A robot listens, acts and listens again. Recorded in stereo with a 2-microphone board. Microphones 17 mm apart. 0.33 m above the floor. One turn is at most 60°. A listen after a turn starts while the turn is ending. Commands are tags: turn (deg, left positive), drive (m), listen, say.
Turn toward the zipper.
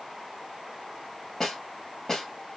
<listen/>
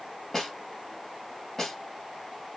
<listen/>
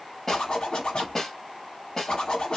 <turn deg="60"/>
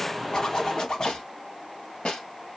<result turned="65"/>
<turn deg="50"/>
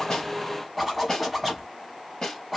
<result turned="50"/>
<say>Facing the zipper.</say>